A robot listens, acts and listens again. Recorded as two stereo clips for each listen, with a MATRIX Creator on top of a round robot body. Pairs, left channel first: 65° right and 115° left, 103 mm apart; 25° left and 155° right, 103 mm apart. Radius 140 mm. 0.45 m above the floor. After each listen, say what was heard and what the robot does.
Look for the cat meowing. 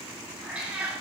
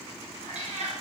The cat meowing: 170° right. Turn 170° right.
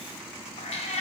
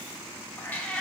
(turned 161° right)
The cat meowing is now 60° right. Turn 60° right.
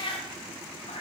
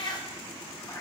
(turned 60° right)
The cat meowing is now 40° right. Turn 40° right.
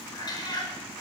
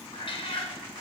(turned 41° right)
The cat meowing is now 10° right. Turn 10° right.
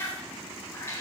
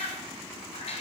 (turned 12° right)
Facing the cat meowing.